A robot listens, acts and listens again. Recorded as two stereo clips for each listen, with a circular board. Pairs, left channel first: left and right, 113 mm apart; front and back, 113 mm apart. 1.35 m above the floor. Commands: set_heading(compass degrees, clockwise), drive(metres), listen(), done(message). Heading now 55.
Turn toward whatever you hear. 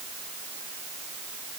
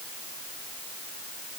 listen()
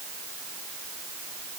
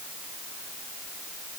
listen()
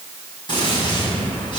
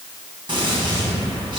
set_heading(280)
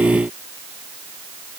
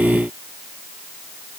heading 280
done("Facing where the gunshot came from. I can't hear it now.")